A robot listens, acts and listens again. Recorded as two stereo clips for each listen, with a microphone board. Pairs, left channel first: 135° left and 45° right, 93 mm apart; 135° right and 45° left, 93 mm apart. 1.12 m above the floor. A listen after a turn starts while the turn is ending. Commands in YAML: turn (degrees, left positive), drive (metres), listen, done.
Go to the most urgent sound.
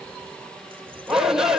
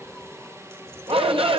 turn: 40
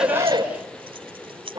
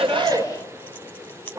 drive: 1.0
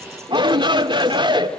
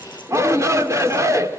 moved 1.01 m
turn: -15
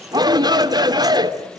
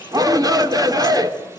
drive: 1.0
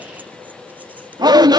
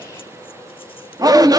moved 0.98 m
drive: 1.0
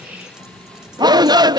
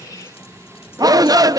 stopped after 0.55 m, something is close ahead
done: "Arrived at the shout, straight ahead."